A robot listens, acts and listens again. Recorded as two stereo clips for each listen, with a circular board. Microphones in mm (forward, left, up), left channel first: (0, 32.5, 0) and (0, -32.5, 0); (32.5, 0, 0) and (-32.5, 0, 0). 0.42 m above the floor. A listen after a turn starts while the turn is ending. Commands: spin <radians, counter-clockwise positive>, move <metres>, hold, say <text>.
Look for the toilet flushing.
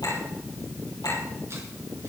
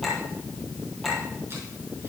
hold
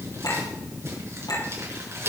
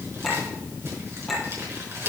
hold
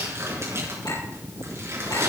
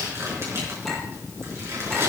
say I can't make out a toilet flushing to turn to.